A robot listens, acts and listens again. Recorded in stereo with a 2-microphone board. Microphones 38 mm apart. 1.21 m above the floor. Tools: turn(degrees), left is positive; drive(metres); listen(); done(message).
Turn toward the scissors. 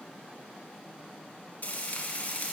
listen()
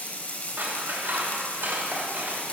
turn(degrees=-90)
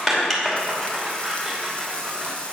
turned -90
done("Facing the scissors, 2 to 4 m away.")